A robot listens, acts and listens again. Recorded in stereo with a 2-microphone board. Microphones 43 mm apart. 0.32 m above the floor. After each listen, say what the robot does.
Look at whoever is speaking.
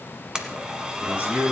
Turn 35° right.
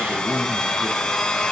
Turn 110° right.
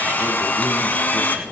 Keep listening.
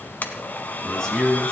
Turn 10° left.
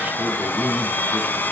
Facing the man speaking, over 4 m away.